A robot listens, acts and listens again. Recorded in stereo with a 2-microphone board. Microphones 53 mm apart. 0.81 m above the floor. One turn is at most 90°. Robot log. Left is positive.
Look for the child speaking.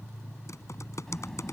cmd yaw +30
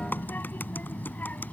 note: So it is at 145° left.
cmd yaw +90
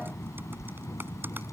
note: The child speaking is now 75° left.
cmd yaw +75
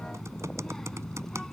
note: The child speaking is now 10° left.
cmd yaw +10
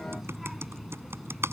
end: Found it: a child speaking, straight ahead.